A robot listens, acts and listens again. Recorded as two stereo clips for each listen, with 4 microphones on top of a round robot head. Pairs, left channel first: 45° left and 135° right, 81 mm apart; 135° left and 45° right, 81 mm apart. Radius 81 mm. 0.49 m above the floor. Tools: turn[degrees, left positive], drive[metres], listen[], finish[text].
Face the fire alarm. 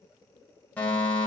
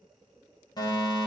Thought: The fire alarm: 115° left.
Action: turn[115]
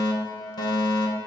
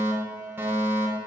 Thought: The fire alarm is now 20° left.
Action: turn[20]
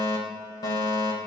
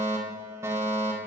Thought: The fire alarm is now 10° left.
Action: turn[10]
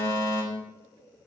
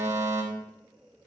Action: finish[Found it: a fire alarm, straight ahead.]